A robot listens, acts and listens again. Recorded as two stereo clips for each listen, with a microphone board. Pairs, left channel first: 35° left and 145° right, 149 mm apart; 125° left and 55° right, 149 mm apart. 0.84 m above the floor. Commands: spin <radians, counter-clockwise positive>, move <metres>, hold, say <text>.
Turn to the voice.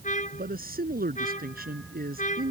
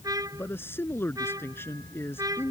spin -2.79
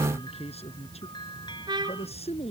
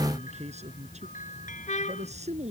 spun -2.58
spin -0.26
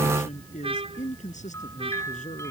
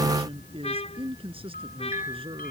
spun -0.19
say Facing the man speaking.